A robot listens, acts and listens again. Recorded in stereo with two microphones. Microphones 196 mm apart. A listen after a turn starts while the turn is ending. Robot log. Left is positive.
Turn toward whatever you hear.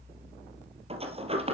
note: The sliding door: about 30° right or 150° right.
cmd yaw -30
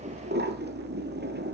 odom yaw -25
note: So it is at 125° right.
cmd yaw -125
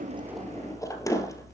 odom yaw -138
note: The sliding door is now 15° left.
cmd yaw +15
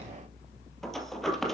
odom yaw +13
end: Facing the sliding door.